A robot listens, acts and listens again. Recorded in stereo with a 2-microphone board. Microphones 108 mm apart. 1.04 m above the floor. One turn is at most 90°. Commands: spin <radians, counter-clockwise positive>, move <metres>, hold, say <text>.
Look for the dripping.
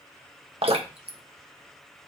spin -1.05
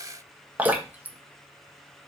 spin -0.26
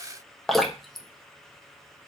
say Found it: dripping, straight ahead, 1 to 2 m away.